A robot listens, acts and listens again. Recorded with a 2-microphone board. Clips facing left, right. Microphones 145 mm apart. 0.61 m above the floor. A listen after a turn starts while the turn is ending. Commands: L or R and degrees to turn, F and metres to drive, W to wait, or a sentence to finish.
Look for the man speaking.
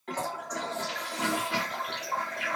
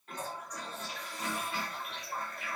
W
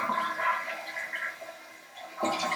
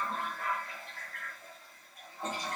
W
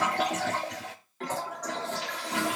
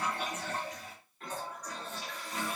I can't make out a man speaking, only a toilet flushing.